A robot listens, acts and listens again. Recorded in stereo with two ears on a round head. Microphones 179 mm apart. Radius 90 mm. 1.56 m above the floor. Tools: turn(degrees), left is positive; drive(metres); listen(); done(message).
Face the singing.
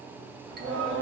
turn(degrees=-90)
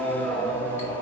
turn(degrees=15)
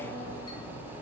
turn(degrees=25)
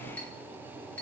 listen()
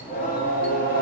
turn(degrees=50)
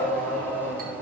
done("Found it: singing, straight ahead, 1 to 2 m away.")